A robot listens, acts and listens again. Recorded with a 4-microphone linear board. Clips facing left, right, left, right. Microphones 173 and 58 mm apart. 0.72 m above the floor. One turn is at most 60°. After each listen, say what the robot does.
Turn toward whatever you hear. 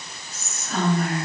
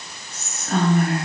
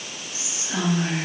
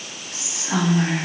Turn 55° right.
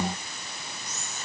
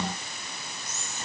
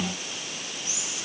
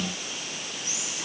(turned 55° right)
Turn 55° right.
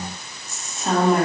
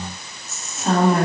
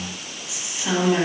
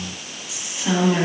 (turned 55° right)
Facing the whispering.